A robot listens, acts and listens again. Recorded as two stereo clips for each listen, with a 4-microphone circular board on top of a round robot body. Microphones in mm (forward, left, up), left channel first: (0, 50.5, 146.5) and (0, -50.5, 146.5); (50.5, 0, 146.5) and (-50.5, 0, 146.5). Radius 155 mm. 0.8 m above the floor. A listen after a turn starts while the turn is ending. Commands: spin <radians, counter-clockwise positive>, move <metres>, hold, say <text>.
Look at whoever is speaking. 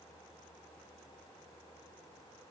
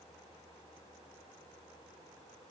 hold
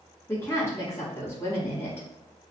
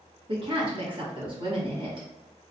spin 2.71
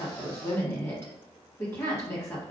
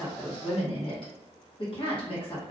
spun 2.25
spin 0.44
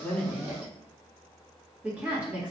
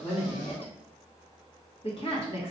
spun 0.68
spin -0.26
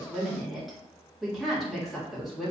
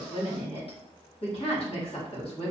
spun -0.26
say Facing the woman speaking, 1 to 2 m away.